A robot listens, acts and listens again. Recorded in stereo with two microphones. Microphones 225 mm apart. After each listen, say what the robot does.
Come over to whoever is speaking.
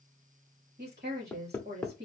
Turn 45° right.
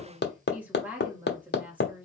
Turn 10° right.
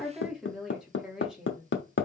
Drive 1.0 m forward.
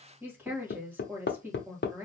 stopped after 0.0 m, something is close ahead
Turn 10° right.
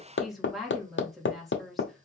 Something is in my way. I am facing the woman speaking but have not reached it.